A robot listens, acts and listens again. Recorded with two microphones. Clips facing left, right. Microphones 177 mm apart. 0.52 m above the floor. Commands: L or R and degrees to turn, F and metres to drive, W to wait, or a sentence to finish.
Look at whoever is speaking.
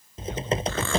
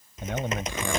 R70
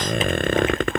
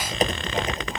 W
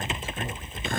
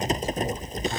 W
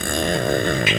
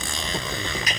I heard a man speaking, but can't make it out now. It was about straight ahead or 40° right.